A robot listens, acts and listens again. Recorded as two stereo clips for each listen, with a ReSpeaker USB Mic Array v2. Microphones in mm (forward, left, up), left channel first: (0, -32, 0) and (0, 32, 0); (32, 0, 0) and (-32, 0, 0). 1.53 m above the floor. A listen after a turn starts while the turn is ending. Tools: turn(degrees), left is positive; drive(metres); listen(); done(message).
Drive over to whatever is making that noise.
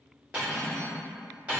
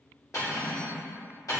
turn(degrees=20)
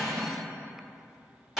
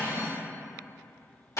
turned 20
drive(metres=1.0)
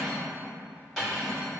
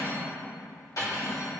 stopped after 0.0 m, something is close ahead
done("Blocked. The cutlery clinking is further on, straight ahead.")